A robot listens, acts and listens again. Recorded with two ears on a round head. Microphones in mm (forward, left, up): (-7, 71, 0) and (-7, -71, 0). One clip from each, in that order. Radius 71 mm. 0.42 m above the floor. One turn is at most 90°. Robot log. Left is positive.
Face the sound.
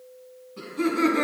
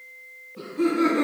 note: The laughter: about 45° left or 135° left.
cmd yaw +45
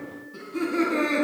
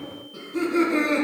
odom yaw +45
end: Found it: laughter, straight ahead, 2 to 4 m away.